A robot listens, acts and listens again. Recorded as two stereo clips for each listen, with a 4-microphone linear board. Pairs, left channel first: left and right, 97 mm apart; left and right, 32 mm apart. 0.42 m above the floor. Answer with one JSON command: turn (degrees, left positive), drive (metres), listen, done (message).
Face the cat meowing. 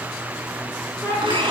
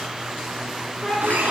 {"turn": 25}
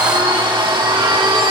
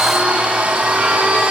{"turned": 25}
{"listen": true}
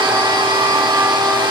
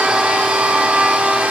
{"listen": true}
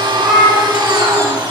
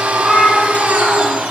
{"turn": -10}
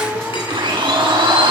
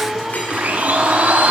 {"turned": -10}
{"done": "Facing the cat meowing."}